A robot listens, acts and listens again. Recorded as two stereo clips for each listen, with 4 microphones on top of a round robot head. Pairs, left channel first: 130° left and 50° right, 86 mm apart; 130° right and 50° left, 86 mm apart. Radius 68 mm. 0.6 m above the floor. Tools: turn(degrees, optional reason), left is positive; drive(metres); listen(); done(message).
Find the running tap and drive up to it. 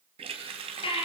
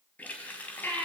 turn(degrees=-60, reason="The running tap: 60° right.")
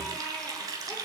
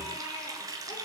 drive(metres=1.0)
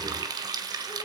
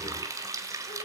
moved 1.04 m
drive(metres=1.0)
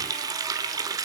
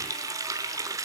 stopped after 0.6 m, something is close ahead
done("I am next to the running tap.")